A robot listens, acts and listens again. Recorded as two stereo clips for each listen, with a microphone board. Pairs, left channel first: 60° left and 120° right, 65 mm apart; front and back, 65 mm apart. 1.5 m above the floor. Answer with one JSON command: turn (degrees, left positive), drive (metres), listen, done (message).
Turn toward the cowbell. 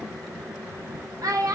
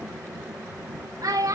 {"listen": true}
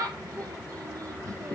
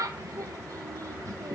{"listen": true}
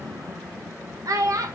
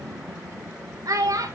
{"done": "I can't make out a cowbell to turn to."}